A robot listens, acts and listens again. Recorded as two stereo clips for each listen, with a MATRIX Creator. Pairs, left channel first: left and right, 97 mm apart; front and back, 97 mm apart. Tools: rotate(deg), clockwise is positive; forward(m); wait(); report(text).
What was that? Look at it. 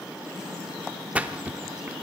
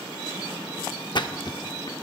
rotate(15)
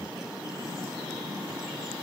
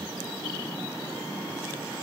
report("I heard a splash from this way, but can't make it out now.")